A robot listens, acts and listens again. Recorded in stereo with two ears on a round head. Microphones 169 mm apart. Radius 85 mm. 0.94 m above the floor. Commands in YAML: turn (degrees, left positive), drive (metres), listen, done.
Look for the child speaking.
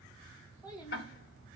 turn: 20
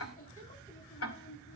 turn: 135
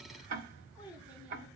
done: "Facing the child speaking."